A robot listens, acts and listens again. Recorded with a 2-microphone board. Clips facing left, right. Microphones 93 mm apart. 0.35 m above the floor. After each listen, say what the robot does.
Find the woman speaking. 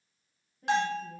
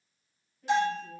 Turn 40° left.
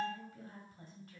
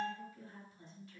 Turn 45° left.
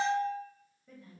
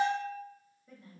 Turn 10° right.
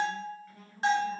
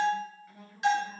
Turn 10° right.
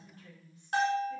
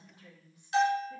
Turn 15° right.
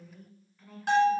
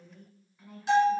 Turn 15° right.
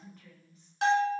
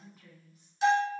Facing the woman speaking, 2 to 4 m away.